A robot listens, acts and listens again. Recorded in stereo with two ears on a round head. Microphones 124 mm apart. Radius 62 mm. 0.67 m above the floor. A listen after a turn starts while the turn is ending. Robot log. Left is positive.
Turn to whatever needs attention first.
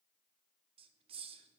cmd idle
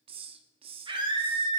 note: The scream: about 35° right or 145° right.
cmd yaw -35
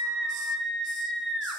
end: Facing the scream, 2 to 4 m away.